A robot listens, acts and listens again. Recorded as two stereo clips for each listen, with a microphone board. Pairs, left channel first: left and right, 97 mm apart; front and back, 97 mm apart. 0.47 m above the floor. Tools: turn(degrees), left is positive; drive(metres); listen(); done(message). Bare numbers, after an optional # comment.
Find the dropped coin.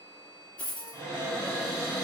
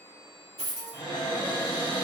# The dropped coin: 15° left.
turn(15)
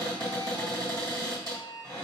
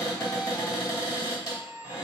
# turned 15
done("I heard a dropped coin from this way, but can't make it out now.")